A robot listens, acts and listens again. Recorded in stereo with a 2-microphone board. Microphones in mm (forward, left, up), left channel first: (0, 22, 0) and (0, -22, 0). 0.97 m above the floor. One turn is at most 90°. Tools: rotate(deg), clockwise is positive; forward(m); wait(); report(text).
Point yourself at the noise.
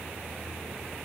wait()
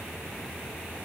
wait()
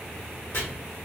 rotate(-55)
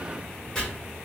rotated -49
rotate(-10)
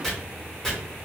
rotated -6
report("Facing the chopping, 1 to 2 m away.")